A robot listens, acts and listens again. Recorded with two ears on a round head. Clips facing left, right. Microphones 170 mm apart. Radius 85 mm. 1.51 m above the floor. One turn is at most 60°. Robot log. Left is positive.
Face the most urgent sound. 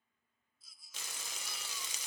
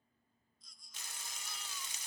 cmd yaw +30
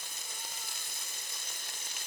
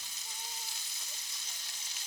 cmd idle
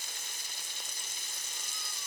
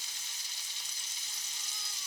cmd idle
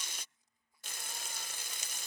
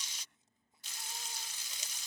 end: I heard a baby crying, but can't make it out now. It was about 25° right or 145° left.